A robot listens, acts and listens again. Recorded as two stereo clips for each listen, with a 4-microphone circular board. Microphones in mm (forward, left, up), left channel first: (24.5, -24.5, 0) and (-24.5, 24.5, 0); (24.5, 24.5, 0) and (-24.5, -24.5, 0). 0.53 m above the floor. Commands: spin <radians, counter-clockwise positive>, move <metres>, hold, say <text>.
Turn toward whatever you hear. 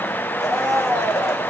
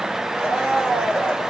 spin -1.13
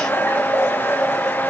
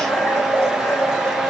say Facing the blender, 2 to 4 m away.